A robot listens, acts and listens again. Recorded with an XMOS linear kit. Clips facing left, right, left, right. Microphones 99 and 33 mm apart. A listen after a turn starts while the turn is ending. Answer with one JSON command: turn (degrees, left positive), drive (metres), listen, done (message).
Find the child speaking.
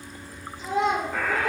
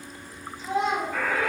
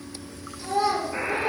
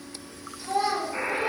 {"turn": 75}
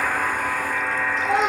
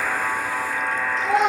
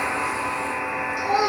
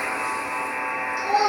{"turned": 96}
{"done": "Facing the child speaking, 1 to 2 m away."}